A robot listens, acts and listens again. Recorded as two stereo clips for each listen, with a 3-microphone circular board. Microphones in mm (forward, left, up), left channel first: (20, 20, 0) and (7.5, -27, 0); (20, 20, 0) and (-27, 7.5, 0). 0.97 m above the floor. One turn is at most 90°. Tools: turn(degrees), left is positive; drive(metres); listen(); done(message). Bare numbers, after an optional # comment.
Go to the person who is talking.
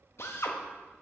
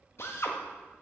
listen()
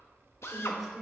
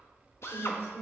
# The woman speaking: 20° right.
turn(-20)
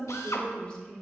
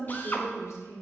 drive(1.0)
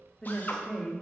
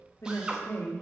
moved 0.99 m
drive(1.0)
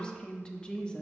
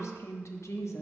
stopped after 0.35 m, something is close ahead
done("I am next to the woman speaking.")